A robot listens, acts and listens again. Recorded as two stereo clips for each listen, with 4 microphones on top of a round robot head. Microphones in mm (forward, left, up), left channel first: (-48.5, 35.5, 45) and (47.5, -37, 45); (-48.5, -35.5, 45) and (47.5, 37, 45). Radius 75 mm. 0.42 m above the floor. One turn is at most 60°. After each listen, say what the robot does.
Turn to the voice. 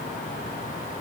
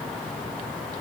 Keep listening.
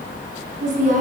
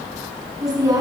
Turn 25° right.
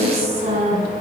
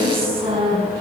Found it: a woman speaking, straight ahead.